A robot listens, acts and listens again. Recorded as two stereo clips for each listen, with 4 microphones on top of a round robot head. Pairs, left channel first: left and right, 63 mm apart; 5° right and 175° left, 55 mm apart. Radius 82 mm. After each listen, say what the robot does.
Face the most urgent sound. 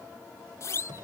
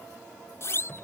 Turn 40° left.
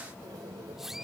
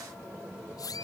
Facing the siren.